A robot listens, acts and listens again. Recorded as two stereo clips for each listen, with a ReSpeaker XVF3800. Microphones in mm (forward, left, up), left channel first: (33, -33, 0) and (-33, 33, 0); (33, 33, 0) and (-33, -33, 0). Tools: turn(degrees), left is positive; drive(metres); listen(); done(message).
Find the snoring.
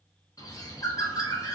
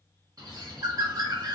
listen()
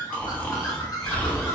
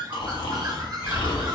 turn(degrees=30)
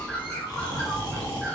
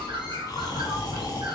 done("Facing the snoring.")